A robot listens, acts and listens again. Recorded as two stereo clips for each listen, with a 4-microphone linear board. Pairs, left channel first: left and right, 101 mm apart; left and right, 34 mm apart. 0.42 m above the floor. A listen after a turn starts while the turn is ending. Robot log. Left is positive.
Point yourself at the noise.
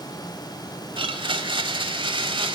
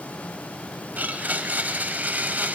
note: The blender: about 60° right or 120° right.
cmd yaw -60
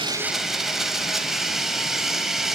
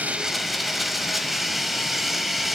end: Facing the blender.